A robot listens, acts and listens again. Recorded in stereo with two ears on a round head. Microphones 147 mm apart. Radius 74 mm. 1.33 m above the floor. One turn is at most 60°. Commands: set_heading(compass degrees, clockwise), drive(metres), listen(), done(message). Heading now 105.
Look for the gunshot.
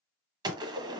set_heading(130)
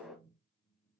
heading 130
done("Found it: a gunshot, straight ahead.")